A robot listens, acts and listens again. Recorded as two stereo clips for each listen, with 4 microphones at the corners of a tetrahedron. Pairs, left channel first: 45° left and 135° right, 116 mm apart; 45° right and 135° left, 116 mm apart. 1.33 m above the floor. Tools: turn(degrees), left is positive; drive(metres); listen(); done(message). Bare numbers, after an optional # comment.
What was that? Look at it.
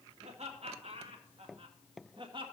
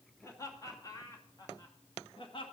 # The laughter: 90° right.
turn(-90)
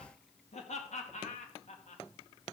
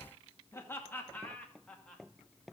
# The laughter is now 40° left.
turn(40)
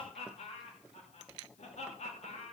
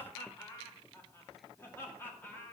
# The laughter is now 25° left.
turn(25)
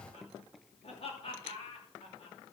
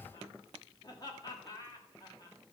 # The laughter is now 10° left.
turn(10)
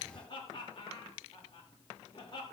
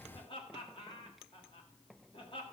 done("Found it: laughter, straight ahead, 2 to 4 m away.")